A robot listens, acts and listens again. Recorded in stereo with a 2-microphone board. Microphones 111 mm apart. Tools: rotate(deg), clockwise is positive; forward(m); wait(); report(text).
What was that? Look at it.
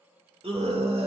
rotate(60)
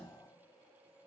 wait()
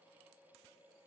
wait()
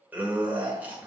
rotate(15)
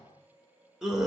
report("Facing the scream.")